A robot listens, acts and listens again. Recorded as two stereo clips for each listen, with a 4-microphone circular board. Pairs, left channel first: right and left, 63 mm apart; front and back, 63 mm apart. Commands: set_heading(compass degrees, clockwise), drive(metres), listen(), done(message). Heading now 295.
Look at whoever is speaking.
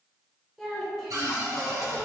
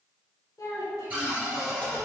done("Facing the child speaking.")